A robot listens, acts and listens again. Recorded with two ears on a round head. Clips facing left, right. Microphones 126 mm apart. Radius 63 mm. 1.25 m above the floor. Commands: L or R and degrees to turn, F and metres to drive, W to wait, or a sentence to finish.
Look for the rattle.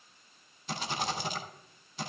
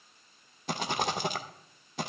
R45
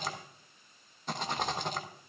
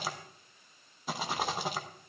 Found it: a rattle, straight ahead, under 1 m away.